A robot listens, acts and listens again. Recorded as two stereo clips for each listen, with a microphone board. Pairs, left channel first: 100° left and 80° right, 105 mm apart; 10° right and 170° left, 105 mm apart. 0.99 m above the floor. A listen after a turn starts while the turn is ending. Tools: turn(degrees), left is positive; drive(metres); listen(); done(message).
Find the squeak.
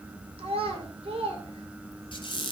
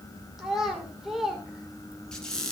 turn(degrees=70)
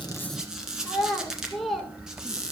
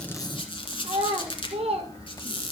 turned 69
done("Found it: a squeak, straight ahead.")